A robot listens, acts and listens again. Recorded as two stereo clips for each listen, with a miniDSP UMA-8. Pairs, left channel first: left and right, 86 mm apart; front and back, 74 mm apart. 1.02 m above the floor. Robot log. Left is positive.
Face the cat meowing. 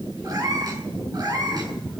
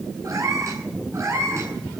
note: The cat meowing: 130° right.
cmd yaw -130
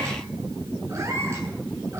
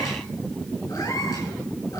cmd idle
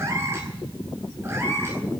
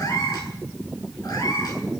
note: The cat meowing is now 30° right.
cmd yaw -30
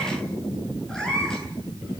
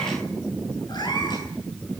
end: Facing the cat meowing, over 4 m away.